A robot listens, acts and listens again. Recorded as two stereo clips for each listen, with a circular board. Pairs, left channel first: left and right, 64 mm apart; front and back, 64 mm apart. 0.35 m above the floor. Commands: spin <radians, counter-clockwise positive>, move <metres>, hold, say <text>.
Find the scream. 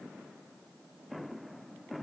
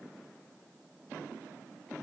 hold
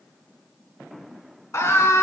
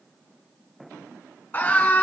spin 0.96
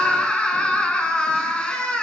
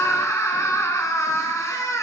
spin 0.35
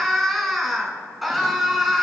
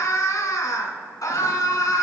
say Found it: a scream, straight ahead.